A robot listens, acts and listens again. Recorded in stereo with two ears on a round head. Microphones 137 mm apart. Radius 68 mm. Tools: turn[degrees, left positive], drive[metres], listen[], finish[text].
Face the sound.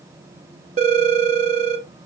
Thought: The phone ringing: about 50° right or 130° right.
Action: turn[-50]
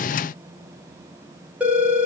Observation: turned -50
Thought: So it is at 10° right.
Action: turn[-10]
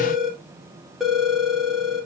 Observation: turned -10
Action: finish[Facing the phone ringing.]